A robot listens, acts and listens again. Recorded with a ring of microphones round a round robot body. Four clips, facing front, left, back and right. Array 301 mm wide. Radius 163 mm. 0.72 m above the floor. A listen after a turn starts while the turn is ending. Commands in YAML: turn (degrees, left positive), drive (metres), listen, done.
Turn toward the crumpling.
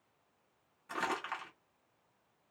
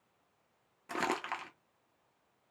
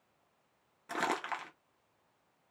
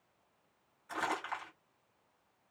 turn: 130
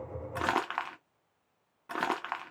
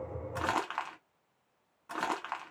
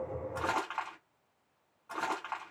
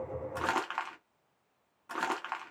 done: "Facing the crumpling."